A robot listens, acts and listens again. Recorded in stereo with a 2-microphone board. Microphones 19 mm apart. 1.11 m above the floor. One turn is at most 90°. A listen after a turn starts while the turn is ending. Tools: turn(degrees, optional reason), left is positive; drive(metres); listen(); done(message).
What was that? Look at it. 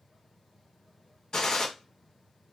turn(degrees=45, reason="The gunshot: about 45° left or 135° left.")
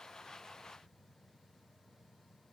listen()
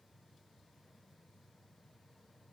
done("I heard a gunshot, but can't make it out now. It was about straight ahead or 90° left.")